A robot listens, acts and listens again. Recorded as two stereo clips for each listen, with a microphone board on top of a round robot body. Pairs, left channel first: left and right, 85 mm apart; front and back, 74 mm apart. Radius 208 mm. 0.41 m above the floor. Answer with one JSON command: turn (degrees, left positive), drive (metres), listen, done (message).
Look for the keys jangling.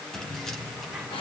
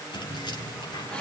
{"done": "Facing the keys jangling."}